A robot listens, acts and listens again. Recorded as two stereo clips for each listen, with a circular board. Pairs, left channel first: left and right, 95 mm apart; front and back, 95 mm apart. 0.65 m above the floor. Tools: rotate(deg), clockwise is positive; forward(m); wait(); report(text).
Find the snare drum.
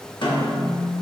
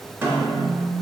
rotate(-115)
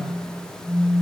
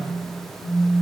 wait()
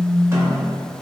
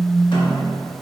rotate(30)
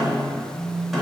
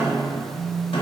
report("Facing the snare drum.")